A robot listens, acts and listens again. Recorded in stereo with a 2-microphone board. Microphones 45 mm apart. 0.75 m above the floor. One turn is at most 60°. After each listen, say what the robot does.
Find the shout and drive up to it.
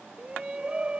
Turn 20° right.
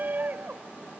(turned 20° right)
Turn 60° right.
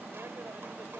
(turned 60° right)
Turn 60° right.
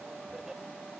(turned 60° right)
Turn 15° right.
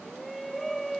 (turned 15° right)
Drive 1.0 m forward.
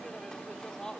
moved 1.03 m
Turn 15° left.
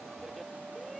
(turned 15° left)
Keep listening.
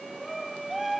Drive 1.0 m forward.
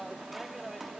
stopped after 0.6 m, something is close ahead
Arrived at the shout, straight ahead.